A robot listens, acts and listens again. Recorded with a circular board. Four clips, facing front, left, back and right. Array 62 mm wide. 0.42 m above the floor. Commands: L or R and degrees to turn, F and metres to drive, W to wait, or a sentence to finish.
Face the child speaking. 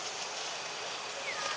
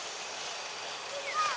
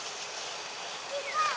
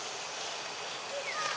L145
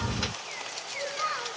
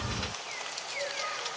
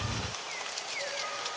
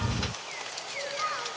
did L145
R40
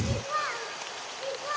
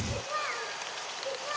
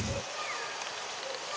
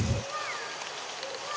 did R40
Found it: a child speaking, straight ahead.